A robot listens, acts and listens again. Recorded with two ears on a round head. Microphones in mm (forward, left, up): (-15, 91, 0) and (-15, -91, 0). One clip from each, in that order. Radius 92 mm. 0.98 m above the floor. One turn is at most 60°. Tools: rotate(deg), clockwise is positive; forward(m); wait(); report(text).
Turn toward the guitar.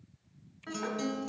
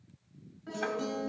rotate(-45)
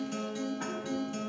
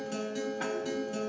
report("Facing the guitar, 2 to 4 m away.")